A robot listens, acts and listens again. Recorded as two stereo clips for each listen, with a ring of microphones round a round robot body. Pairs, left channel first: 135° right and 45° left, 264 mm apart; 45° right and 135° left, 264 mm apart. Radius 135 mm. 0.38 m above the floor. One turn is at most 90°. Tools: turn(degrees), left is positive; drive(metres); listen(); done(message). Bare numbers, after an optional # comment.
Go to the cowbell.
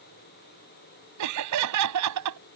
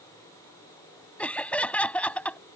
listen()
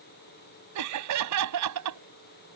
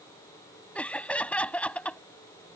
listen()
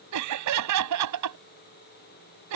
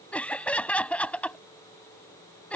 done("I can't make out a cowbell, only laughter.")